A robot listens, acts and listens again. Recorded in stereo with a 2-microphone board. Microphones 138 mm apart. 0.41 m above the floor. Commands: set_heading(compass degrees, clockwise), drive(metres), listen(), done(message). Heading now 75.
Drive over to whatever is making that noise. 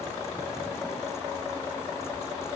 listen()
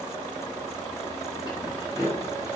set_heading(45)
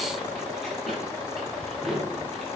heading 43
drive(1.0)
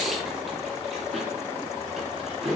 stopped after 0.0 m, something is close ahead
done("Something is in my way. I am facing the keys jangling but have not reached it.")